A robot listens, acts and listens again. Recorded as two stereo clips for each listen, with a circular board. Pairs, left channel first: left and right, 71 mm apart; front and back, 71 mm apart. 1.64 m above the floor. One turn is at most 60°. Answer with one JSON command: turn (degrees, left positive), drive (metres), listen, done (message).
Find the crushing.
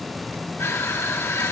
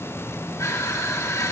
{"turn": 40}
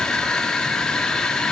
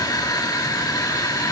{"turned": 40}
{"turn": 10}
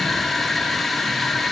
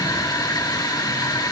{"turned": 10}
{"done": "Facing the crushing, 2 to 4 m away."}